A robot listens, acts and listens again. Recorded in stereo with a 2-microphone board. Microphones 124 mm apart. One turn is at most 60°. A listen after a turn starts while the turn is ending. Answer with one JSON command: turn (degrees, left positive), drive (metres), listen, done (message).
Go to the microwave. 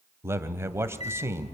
{"turn": 55}
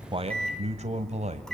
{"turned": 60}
{"drive": 1.0}
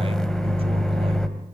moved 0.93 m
{"drive": 1.0}
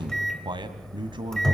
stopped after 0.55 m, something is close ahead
{"done": "Arrived at the microwave, straight ahead."}